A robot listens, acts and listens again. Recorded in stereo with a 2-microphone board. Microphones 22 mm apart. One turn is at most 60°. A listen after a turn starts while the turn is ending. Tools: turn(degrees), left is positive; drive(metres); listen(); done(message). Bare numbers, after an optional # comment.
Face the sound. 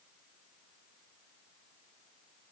listen()
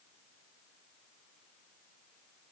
listen()
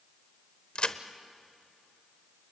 # The crack: about 55° left or 125° left.
turn(55)
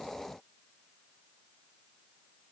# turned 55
listen()
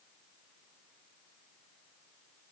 done("I heard a crack, but can't make it out now. It was about straight ahead or 70° left.")